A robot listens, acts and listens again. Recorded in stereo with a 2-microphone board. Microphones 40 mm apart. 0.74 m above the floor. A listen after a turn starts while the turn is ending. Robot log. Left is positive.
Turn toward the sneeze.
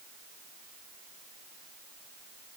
cmd idle
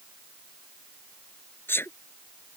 cmd yaw +90
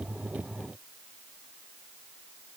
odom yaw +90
end: I heard a sneeze from this way, but can't make it out now.